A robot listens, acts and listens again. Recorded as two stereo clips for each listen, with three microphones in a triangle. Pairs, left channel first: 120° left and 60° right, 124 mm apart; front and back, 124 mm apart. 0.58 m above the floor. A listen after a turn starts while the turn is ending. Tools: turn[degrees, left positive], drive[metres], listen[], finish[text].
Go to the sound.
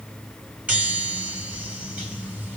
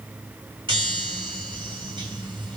Thought: The chime: 140° right.
Action: turn[-140]
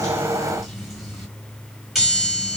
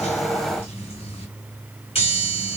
Thought: The chime is now 25° left.
Action: turn[25]
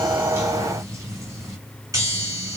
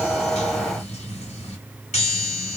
Action: drive[1.0]
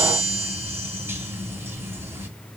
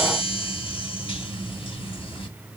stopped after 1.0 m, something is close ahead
Action: finish[Arrived at the chime, straight ahead.]